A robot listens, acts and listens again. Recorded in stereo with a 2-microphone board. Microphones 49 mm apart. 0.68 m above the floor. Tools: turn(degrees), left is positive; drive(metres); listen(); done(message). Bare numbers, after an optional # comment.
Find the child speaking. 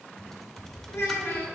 # The child speaking: about 70° left or 110° left.
turn(70)
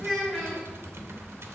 done("Found it: a child speaking, straight ahead.")